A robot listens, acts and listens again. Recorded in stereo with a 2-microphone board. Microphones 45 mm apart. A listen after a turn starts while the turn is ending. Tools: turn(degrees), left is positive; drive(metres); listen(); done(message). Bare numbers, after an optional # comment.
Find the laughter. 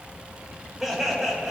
turn(-30)
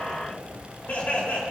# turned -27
# So it is at 40° left.
turn(40)
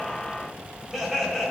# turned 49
done("Facing the laughter.")